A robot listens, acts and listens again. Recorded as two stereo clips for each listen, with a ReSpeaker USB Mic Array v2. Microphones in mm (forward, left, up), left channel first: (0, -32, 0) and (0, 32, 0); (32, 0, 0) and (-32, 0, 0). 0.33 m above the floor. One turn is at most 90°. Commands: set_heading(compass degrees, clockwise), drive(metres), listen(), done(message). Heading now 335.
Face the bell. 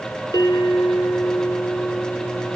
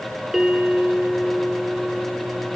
set_heading(65)
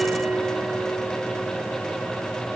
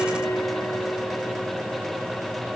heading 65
done("Found it: a bell, straight ahead, 2 to 4 m away.")